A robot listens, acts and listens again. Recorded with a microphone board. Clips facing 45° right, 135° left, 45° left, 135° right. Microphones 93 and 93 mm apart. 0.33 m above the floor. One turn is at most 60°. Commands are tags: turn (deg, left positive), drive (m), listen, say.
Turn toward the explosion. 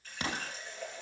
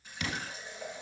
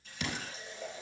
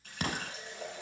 <turn deg="-60"/>
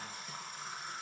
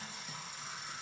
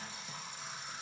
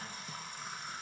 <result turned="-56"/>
<turn deg="-40"/>
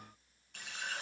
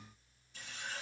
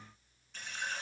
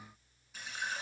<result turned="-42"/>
<say>Facing where the explosion came from. I can't hear it now.</say>